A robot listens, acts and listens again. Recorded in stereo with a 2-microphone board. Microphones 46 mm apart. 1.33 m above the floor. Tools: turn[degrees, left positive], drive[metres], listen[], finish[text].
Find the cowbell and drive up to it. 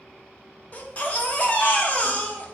Action: listen[]
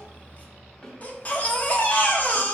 Action: listen[]
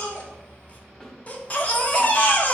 Action: finish[I can't make out a cowbell, only a baby crying and a snare drum.]